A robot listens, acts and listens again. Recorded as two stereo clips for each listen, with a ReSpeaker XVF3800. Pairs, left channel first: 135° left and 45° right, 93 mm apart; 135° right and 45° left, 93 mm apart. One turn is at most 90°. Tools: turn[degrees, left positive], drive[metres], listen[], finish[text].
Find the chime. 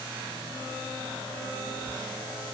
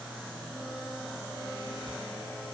Action: listen[]
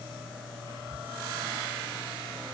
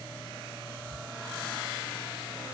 Action: listen[]
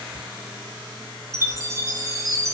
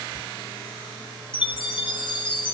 Thought: The chime: 100° right.
Action: turn[-90]
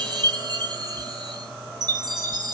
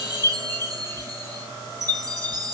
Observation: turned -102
Action: finish[Found it: a chime, straight ahead, under 1 m away.]